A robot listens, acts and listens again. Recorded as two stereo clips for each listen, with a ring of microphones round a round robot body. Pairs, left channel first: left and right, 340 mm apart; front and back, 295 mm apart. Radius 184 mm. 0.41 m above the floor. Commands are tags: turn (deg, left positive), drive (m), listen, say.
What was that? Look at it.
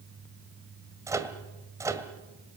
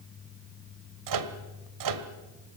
<turn deg="-170"/>
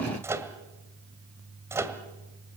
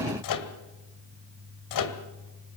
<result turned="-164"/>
<say>Found it: a microwave, straight ahead.</say>